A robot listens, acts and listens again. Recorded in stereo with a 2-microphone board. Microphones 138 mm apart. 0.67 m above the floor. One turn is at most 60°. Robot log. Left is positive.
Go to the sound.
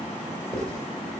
cmd yaw +30
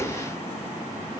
cmd idle
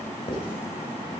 note: So it is at 140° left.
cmd yaw +60
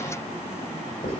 note: The writing is now 100° left.
cmd yaw +60
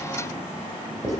note: The writing is now 25° left.
cmd yaw +25
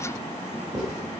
cmd fwd 1.0
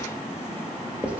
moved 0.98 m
note: The writing is now 10° right.
cmd yaw -10
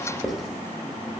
cmd fwd 1.0
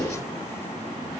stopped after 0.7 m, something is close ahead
end: I am next to the writing.